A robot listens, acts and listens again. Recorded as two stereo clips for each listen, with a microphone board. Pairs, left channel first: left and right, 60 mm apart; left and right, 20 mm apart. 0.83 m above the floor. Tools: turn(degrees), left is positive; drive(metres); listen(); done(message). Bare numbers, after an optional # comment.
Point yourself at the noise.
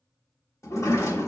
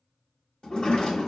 # The sliding door: about 60° left or 120° left.
turn(60)
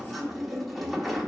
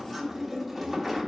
done("Found it: a sliding door, straight ahead.")